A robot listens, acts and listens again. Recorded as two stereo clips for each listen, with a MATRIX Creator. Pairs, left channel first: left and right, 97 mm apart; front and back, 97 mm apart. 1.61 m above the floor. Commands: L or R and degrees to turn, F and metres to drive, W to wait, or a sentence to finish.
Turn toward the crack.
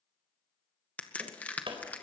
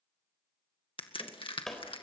L15
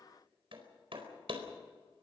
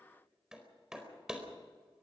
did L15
Facing where the crack came from. I can't hear it now.